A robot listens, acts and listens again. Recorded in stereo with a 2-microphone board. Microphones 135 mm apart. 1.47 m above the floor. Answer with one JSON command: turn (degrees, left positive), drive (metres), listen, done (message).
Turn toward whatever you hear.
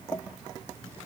{"listen": true}
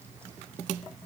{"listen": true}
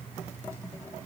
{"done": "I can't make out anything."}